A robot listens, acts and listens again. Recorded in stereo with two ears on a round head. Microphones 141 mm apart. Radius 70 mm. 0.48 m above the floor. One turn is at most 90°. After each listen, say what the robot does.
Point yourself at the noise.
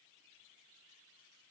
Keep listening.
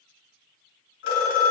Turn 90° left.
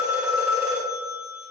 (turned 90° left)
Turn 10° right.
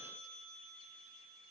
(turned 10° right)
Keep listening.
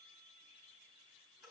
Keep listening.
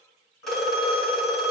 Found it: a phone ringing, straight ahead, 2 to 4 m away.